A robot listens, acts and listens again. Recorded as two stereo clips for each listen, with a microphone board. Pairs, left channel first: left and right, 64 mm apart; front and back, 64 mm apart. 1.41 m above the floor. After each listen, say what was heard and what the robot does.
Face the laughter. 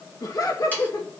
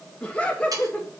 The laughter: 70° left. Turn 70° left.
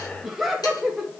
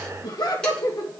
Facing the laughter, 2 to 4 m away.